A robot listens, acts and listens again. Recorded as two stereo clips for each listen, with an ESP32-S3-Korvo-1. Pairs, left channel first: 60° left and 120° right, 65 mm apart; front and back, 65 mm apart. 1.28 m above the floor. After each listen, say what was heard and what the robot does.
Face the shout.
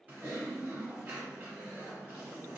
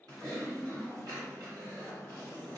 Keep listening.
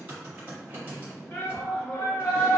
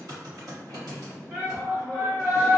The shout: 110° left. Turn 110° left.
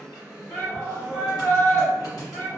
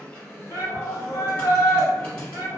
Found it: a shout, straight ahead.